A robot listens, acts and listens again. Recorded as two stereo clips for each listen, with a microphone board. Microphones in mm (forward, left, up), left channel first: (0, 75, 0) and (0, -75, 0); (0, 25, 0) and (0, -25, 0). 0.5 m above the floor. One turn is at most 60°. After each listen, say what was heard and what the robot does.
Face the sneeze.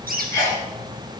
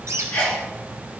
The sneeze: about 25° left or 155° left. Turn 25° left.
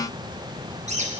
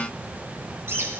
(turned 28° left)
Keep listening.
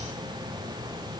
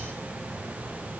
I heard a sneeze, but can't make it out now. It was about 5° right or 125° left.